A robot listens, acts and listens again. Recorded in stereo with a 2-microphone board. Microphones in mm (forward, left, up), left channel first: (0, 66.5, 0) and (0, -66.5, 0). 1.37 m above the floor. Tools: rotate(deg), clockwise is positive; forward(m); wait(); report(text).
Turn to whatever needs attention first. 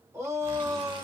rotate(20)
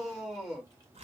report("Facing the shout.")